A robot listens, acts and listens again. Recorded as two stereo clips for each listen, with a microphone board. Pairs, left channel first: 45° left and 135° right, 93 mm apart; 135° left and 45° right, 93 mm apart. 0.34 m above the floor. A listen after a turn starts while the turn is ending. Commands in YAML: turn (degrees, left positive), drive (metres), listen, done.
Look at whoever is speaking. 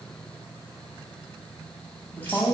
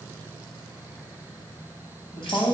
turn: 115
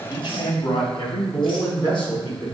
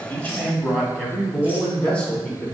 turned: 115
turn: 65
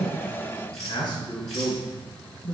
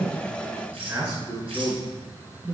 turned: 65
done: "Facing the man speaking, 2 to 4 m away."